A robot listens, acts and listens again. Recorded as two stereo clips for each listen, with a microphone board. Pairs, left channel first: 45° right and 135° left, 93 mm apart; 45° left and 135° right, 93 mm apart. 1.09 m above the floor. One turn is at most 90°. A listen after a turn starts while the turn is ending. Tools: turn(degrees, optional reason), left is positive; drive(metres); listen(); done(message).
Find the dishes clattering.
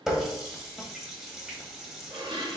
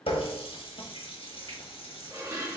turn(degrees=90, reason="The dishes clattering: 165° left.")
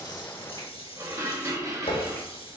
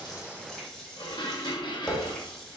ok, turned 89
turn(degrees=80, reason="The dishes clattering is now 80° left.")
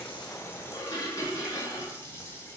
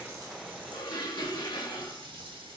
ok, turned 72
done("Found it: dishes clattering, straight ahead, 1 to 2 m away.")